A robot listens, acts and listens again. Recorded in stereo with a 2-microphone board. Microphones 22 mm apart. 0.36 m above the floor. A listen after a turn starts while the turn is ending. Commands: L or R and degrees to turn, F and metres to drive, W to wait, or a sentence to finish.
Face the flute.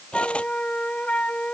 L75
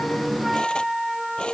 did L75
Found it: a flute, straight ahead.